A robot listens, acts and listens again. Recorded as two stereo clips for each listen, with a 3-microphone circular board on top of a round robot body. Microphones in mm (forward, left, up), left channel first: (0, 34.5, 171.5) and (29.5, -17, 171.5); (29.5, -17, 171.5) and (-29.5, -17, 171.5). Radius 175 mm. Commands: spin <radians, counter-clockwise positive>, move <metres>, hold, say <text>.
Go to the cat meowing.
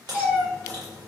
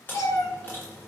spin 0.17
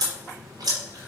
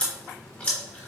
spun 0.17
hold
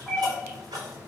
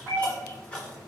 move 1.0
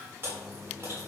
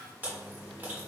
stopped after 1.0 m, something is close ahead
hold
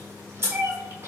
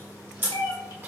say Arrived at the cat meowing, straight ahead.